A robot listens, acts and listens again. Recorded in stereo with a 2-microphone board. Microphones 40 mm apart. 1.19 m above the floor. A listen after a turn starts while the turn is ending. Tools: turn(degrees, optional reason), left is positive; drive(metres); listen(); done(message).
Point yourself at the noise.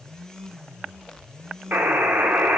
turn(degrees=-45, reason="The buzzer: about 45° right or 135° right.")
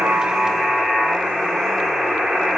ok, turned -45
done("Facing the buzzer.")